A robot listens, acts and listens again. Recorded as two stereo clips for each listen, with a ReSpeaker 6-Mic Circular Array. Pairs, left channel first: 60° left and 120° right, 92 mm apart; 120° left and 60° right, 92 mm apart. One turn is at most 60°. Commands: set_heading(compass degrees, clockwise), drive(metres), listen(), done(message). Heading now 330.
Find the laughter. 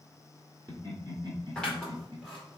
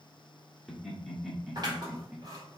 set_heading(30)
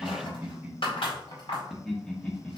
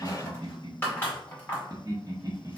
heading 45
set_heading(60)
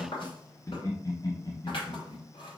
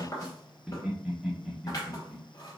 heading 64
set_heading(39)
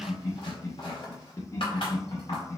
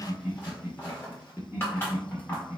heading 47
set_heading(37)
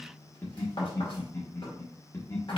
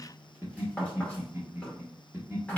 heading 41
done("Facing the laughter.")